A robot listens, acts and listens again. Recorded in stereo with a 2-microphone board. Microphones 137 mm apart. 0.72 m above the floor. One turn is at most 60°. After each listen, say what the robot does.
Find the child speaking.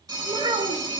Turn 40° right.
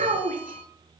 Turn 60° right.
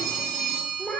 Turn 10° left.
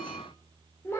Turn 20° left.
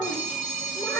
Turn 15° left.
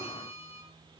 Keep listening.
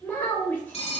Turn 15° left.
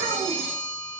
Keep listening.
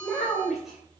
Facing the child speaking, 2 to 4 m away.